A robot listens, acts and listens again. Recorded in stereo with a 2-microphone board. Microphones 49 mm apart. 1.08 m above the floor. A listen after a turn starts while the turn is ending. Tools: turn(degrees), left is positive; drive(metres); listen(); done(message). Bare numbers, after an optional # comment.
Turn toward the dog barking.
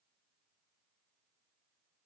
listen()
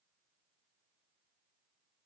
listen()
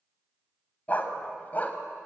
# The dog barking: about 35° left or 145° left.
turn(35)
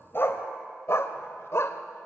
# So it is at 115° left.
turn(115)
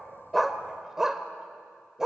# The dog barking is now 10° right.
turn(-10)
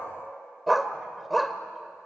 done("Found it: a dog barking, straight ahead.")